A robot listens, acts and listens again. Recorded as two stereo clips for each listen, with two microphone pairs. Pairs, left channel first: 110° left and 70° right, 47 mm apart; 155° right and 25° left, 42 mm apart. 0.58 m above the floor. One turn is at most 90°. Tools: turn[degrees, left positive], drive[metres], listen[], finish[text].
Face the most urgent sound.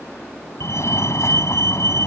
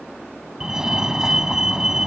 Thought: The fire alarm: 100° left.
Action: turn[90]
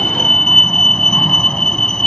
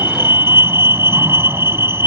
Thought: The fire alarm is now 30° left.
Action: turn[30]
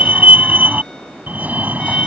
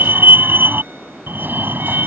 Thought: The fire alarm is now 15° right.
Action: turn[-15]
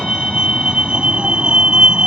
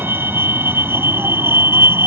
Action: finish[Found it: a fire alarm, straight ahead.]